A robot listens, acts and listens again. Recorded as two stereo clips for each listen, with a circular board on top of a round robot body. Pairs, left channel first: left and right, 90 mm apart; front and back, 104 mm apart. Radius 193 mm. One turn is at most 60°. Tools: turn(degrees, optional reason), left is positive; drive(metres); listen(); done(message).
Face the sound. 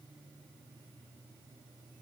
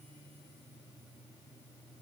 listen()
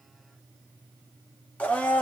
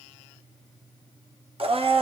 turn(degrees=60, reason="The blender: 165° left.")
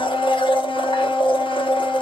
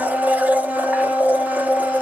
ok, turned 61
turn(degrees=60, reason="The blender is now 105° left.")
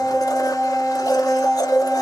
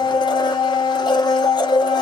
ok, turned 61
turn(degrees=45, reason="The blender is now 45° left.")
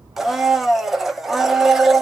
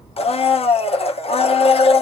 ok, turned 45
done("Found it: a blender, straight ahead.")